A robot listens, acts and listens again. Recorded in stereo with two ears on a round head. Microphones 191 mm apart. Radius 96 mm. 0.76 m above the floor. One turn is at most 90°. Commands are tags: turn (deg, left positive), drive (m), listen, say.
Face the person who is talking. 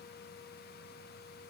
<listen/>
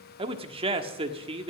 <turn deg="-25"/>
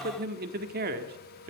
<turn deg="-90"/>
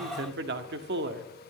<turn deg="-55"/>
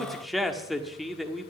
<say>Facing the man speaking, 1 to 2 m away.</say>